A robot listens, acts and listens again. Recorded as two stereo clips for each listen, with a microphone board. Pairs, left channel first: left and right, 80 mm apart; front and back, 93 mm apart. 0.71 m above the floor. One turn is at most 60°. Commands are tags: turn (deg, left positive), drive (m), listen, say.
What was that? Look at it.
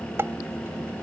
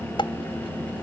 <turn deg="-30"/>
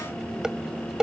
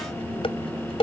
<turn deg="-10"/>
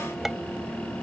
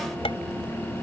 <listen/>
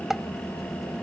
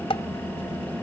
<say>Facing the dishes clattering.</say>